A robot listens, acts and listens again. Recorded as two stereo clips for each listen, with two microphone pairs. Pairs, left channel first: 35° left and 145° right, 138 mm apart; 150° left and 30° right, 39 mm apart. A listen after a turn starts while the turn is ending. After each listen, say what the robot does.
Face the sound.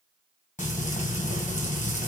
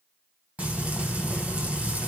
Turn 15° left.
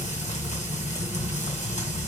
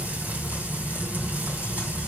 Facing the frying.